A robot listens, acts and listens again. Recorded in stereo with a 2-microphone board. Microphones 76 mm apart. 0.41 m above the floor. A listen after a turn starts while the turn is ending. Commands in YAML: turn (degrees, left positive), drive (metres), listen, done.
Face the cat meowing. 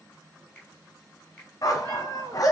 turn: -60
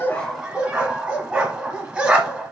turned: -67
listen: true
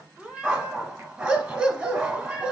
turn: -15
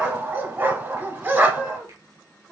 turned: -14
done: "Found it: a cat meowing, straight ahead."